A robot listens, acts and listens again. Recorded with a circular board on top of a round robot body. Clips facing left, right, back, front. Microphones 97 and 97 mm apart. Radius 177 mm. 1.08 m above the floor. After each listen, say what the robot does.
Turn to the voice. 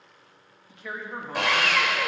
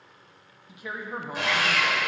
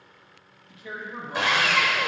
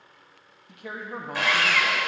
Turn 15° right.
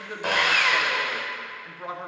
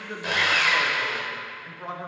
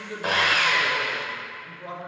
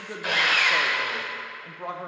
Facing the man speaking, 1 to 2 m away.